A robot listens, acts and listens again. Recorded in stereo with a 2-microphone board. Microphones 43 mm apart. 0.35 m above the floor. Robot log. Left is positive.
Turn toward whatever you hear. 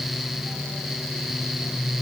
cmd idle
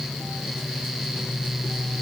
cmd idle
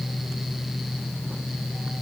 end: I can't make out anything.